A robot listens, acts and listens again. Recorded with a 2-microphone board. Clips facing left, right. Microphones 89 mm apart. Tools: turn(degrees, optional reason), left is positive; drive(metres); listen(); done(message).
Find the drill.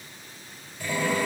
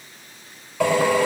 turn(degrees=-90)
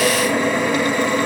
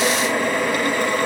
done("Facing the drill.")